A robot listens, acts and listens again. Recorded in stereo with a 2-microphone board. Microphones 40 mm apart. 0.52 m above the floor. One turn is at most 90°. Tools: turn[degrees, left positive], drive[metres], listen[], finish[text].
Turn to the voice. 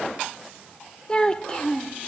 Thought: The child speaking: about 20° left or 160° left.
Action: turn[20]
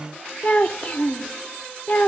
Thought: So it is at 135° left.
Action: turn[90]
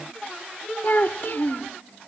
Thought: The child speaking is now 55° left.
Action: turn[55]
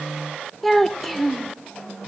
Action: finish[Found it: a child speaking, straight ahead.]